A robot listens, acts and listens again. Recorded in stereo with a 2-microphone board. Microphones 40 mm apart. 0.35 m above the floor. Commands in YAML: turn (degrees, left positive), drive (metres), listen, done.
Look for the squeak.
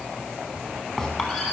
turn: -30
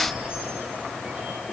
listen: true
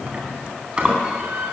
turn: -145
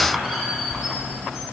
done: "Found it: a squeak, straight ahead, 2 to 4 m away."